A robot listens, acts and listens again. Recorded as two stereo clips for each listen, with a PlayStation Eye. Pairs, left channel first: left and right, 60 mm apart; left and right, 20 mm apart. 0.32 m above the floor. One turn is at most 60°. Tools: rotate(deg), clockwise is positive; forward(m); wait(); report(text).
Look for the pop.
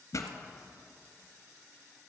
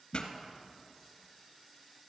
rotate(-60)
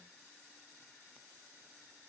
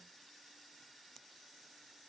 wait()
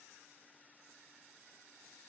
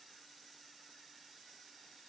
report("I heard a pop, but can't make it out now. It was about 5° left or 55° left.")